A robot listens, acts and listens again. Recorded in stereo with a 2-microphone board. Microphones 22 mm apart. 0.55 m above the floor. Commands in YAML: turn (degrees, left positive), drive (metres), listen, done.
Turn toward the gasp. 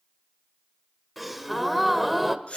turn: -30
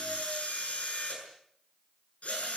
listen: true
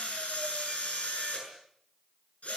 done: "I heard a gasp, but can't make it out now. It was about 25° left or 145° right."